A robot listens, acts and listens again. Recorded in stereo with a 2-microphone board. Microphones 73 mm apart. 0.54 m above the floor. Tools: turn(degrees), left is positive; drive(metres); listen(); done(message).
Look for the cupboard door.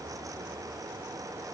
listen()
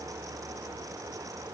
listen()
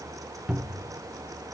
turn(degrees=-30)
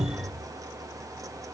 turn(degrees=-140)
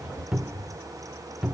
turn(degrees=-10)
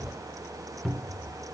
done("Facing the cupboard door.")